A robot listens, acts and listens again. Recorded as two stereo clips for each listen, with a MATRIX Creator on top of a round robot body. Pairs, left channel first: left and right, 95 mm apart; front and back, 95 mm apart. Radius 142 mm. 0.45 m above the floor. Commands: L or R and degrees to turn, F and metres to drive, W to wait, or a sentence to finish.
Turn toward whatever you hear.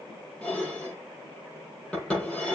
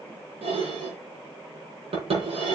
L170
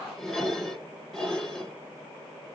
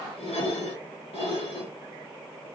Facing the dishes clattering, over 4 m away.